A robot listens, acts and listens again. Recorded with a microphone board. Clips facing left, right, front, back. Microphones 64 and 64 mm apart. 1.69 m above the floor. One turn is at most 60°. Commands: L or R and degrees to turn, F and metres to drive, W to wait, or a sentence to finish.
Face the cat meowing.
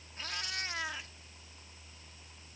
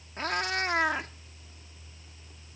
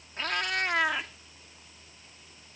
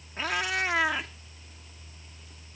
R60
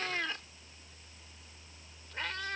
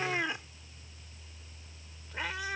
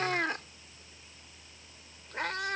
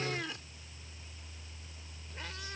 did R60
R10
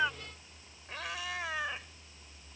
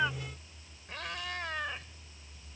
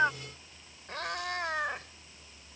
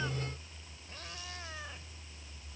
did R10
Facing the cat meowing.